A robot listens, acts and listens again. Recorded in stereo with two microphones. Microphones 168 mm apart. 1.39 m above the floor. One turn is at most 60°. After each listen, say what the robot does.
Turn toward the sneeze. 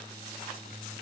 Keep listening.
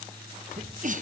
Turn 55° right.
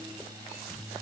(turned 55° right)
Keep listening.
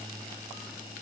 I heard a sneeze, but can't make it out now. It was about straight ahead or 70° right.